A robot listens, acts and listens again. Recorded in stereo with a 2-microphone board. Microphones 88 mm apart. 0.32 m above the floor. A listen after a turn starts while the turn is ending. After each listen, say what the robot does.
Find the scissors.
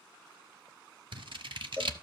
Turn 65° right.
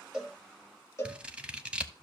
Turn 15° right.
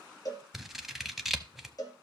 Facing the scissors, under 1 m away.